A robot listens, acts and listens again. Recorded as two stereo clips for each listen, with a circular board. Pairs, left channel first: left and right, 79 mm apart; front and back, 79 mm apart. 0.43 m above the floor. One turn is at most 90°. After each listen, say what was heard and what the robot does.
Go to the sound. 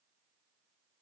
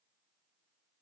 Keep listening.
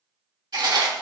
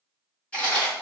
The chewing: 75° right. Turn 75° right.
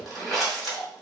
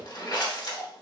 Drive 1.0 m forward.
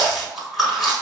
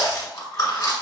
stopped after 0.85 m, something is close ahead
Arrived at the chewing, straight ahead.